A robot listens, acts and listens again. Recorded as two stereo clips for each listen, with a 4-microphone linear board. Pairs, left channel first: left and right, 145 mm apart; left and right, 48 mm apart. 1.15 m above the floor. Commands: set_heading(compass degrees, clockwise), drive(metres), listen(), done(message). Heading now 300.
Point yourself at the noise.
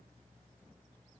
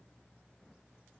listen()
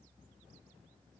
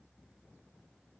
listen()
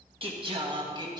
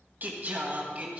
set_heading(330)
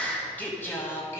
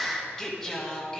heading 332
set_heading(312)
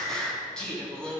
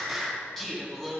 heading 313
set_heading(303)
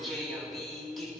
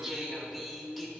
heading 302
done("Found it: singing, straight ahead, 2 to 4 m away.")